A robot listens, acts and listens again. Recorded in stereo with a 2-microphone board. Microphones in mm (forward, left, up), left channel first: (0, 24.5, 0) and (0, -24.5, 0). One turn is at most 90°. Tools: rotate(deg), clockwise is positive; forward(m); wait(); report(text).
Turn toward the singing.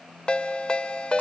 wait()
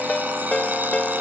wait()
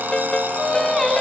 rotate(-30)
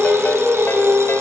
rotate(35)
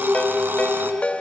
rotate(25)
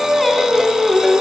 report("Found it: singing, straight ahead.")